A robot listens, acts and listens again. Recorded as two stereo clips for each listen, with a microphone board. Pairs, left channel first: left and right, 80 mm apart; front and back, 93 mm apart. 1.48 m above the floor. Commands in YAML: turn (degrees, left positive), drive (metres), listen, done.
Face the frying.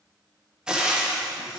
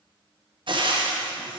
turn: -165
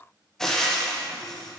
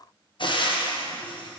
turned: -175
done: "Facing the frying."